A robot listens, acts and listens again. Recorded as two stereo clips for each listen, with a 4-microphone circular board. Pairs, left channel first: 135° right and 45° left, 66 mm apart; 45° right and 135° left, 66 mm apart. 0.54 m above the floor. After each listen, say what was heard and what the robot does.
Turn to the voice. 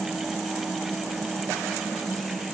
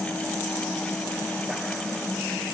Keep listening.
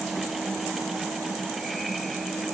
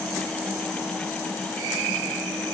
Keep listening.
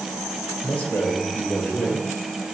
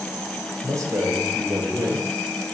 The man speaking: 165° left. Turn 165° left.
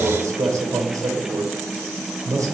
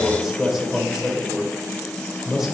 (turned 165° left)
The man speaking is now 50° left. Turn 50° left.
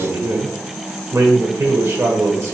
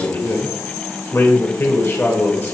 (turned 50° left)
Facing the man speaking.